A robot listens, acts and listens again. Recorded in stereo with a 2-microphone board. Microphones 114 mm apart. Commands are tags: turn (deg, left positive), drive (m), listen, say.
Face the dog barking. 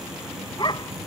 <turn deg="45"/>
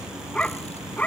<turn deg="15"/>
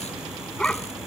<turn deg="10"/>
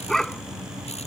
<say>Found it: a dog barking, straight ahead.</say>